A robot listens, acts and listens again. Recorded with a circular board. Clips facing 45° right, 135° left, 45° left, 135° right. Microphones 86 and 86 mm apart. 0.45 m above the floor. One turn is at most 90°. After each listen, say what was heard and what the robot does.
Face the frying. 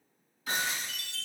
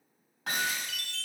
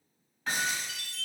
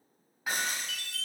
The frying: 100° right. Turn 90° right.
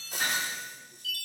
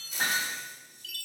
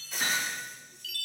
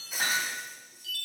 The frying is now 50° right. Turn 50° right.
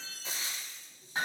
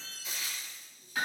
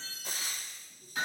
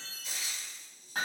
The frying is now 10° left. Turn 10° left.
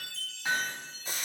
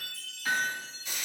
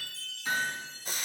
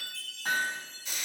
Facing the frying, under 1 m away.